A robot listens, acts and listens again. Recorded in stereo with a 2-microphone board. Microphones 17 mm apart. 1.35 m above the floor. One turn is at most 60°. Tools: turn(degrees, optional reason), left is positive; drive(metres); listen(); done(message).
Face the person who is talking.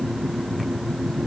listen()
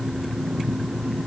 listen()
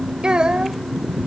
turn(degrees=-55, reason="The child speaking: about 55° right or 125° right.")
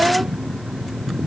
turn(degrees=-60, reason="So it is at 65° right.")
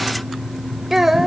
turn(degrees=-20, reason="The child speaking is now 20° right.")
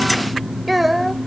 done("Found it: a child speaking, straight ahead.")